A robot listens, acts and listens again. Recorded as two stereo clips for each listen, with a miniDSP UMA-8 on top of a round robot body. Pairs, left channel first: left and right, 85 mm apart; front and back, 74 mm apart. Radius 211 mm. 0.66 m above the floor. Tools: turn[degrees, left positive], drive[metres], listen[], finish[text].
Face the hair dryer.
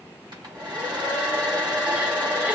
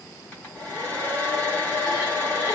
Thought: The hair dryer: 65° right.
Action: turn[-65]
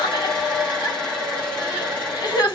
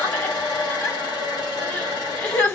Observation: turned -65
Action: finish[Facing the hair dryer.]